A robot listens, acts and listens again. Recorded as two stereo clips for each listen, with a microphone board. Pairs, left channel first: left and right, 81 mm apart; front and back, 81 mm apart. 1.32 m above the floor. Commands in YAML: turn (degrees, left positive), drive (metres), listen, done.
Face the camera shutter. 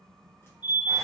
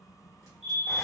listen: true
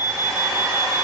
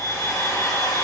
listen: true
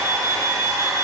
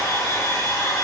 done: "I can't make out a camera shutter to turn to."